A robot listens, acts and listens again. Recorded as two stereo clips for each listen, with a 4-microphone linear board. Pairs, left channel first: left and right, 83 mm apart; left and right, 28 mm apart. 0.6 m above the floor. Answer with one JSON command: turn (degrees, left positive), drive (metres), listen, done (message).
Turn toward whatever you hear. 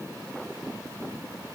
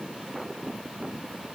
{"listen": true}
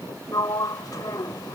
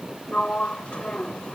{"turn": 50}
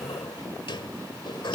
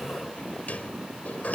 {"turn": 75}
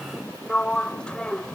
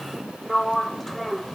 {"turn": 10}
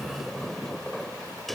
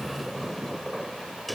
{"done": "Found it: a sliding door, straight ahead."}